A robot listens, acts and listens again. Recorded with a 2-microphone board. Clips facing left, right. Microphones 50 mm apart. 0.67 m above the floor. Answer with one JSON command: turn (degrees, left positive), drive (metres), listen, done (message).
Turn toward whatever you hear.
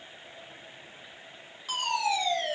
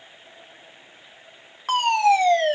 {"turn": -50}
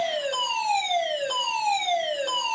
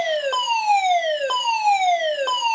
{"turn": -60}
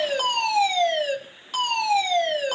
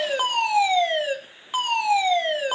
{"turn": -20}
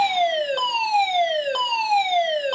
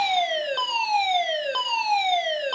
{"done": "Found it: a fire alarm, straight ahead."}